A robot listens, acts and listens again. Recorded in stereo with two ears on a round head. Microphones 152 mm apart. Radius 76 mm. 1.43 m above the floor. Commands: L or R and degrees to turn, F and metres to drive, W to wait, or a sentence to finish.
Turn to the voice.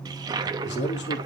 L70
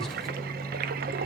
W
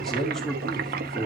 Facing the man speaking.